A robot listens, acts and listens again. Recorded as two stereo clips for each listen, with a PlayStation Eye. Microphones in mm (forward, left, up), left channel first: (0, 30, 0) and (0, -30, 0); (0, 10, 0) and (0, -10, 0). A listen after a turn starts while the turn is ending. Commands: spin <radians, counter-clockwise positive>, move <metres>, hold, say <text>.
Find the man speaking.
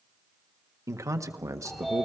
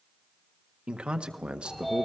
spin -1.05
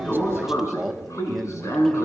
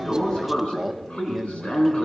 say Facing the man speaking, 1 to 2 m away.